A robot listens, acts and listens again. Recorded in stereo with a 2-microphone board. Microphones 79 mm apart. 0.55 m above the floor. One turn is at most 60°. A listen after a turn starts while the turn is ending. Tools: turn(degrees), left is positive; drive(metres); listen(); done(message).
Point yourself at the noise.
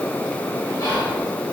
turn(degrees=60)
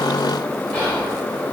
turn(degrees=25)
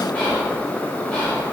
turn(degrees=15)
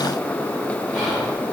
done("Facing the whispering.")